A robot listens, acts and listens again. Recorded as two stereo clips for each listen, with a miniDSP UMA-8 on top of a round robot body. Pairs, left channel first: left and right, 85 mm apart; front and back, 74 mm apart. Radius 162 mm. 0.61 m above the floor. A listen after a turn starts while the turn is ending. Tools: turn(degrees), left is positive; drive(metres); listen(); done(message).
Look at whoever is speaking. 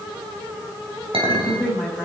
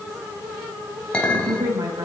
turn(degrees=180)
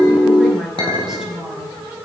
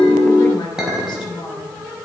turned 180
done("Facing the woman speaking, over 4 m away.")